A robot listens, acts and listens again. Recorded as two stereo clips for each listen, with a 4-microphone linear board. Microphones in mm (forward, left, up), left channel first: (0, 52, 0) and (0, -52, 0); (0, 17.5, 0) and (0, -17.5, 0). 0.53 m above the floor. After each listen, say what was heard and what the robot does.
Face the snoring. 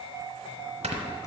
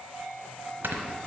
Turn 90° right.
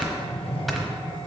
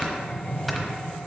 Facing the snoring.